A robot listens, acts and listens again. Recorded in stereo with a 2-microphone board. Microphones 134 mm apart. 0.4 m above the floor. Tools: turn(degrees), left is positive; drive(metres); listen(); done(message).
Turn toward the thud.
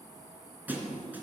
turn(degrees=-30)
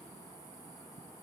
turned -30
listen()
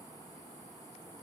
done("I heard a thud, but can't make it out now. It was about 15° left or 135° right.")